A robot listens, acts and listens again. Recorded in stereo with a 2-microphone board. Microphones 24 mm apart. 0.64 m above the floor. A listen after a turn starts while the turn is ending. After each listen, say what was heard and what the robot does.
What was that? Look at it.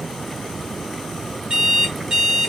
The alarm clock: about 35° right or 145° right. Turn 35° right.
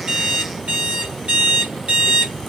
So it is at 110° right. Turn 110° right.
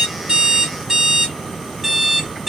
The alarm clock is now 15° right. Turn 15° right.
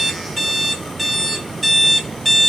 Found it: an alarm clock, straight ahead.